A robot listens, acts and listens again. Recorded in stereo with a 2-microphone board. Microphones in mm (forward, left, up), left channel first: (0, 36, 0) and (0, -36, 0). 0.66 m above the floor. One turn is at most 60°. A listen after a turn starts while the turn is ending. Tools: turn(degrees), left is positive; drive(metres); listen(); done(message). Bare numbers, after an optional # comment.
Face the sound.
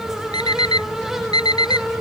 # The alarm clock: about 75° left or 105° left.
turn(60)
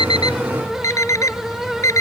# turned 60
# So it is at 45° left.
turn(45)
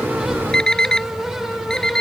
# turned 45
# The alarm clock is now 10° left.
turn(10)
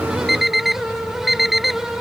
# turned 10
done("Facing the alarm clock.")